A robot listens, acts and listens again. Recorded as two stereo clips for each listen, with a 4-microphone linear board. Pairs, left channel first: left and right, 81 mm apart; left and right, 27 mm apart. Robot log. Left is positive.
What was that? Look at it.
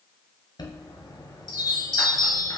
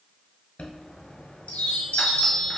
note: The chime: about 55° left or 125° left.
cmd yaw +55
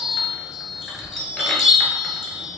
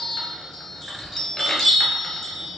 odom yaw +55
end: Found it: a chime, straight ahead, 1 to 2 m away.